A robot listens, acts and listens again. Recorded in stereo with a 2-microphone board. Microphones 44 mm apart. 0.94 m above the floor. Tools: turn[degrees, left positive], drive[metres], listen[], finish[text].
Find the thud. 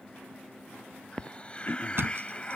Thought: The thud: about 65° right or 115° right.
Action: turn[-65]
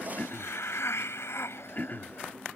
Action: listen[]
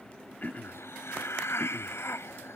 Action: finish[I heard a thud, but can't make it out now. It was about straight ahead or 50° right.]